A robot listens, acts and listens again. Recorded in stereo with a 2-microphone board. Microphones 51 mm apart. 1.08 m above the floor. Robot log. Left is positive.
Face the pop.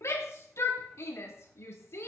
cmd idle
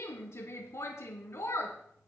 cmd idle
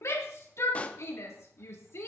note: The pop: about 30° left or 150° left.
cmd yaw +30
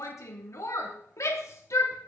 cmd idle
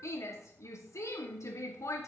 end: I heard a pop, but can't make it out now. It was about straight ahead or 120° left.